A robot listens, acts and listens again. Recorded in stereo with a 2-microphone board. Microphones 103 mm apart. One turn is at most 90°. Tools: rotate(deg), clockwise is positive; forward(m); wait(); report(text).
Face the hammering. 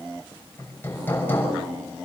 rotate(-20)
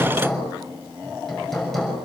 report("Facing the hammering, over 4 m away.")